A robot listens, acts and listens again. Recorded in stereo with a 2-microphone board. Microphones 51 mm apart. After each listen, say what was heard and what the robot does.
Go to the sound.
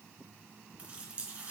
The running tap: about 25° right or 155° right. Turn 25° right.
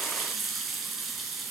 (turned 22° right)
Drive 1.0 m forward.
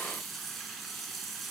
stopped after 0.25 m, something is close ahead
Blocked. The running tap is further on, straight ahead.